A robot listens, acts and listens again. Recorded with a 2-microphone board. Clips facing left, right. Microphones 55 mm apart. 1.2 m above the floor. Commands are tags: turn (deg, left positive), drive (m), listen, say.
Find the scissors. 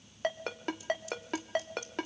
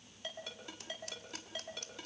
<turn deg="-65"/>
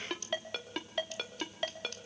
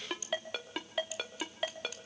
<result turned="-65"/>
<turn deg="-10"/>
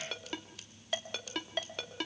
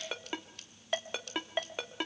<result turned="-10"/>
<say>Found it: scissors, straight ahead.</say>